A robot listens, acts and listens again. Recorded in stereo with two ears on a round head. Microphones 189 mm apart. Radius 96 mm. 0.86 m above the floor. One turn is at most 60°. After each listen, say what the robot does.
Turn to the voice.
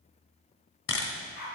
Keep listening.
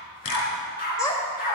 Turn 20° left.
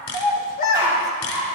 Turn 60° left.
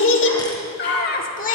Turn 35° left.
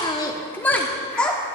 Facing the child speaking, 1 to 2 m away.